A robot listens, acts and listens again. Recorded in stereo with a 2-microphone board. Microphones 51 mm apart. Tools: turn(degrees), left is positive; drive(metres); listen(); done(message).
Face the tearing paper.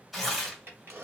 turn(degrees=-30)
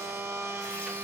listen()
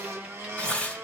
turn(degrees=30)
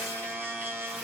listen()
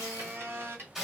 turn(degrees=-10)
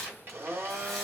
done("Facing the tearing paper.")